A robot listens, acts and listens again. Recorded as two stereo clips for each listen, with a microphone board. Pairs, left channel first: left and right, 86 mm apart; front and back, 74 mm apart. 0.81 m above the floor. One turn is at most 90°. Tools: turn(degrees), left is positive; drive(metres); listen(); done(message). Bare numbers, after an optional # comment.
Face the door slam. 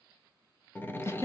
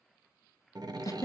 # The door slam: 155° left.
turn(90)
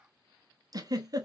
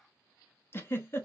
# Nothing new. It was at 65° left.
turn(65)
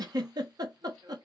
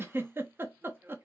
done("Facing where the door slam came from. I can't hear it now.")